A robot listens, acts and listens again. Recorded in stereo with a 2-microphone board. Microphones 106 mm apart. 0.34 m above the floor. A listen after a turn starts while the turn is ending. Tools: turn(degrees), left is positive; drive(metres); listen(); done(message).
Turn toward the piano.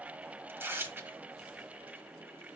listen()
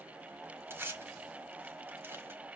listen()
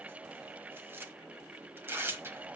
done("I can't make out a piano, only tearing paper.")